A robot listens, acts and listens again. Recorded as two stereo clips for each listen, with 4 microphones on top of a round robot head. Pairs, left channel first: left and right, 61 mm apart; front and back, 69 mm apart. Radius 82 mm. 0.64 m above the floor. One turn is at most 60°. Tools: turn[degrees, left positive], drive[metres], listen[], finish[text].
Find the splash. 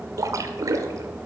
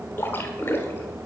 Thought: The splash: 65° right.
Action: turn[-60]
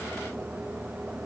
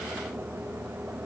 Action: finish[Facing where the splash came from. I can't hear it now.]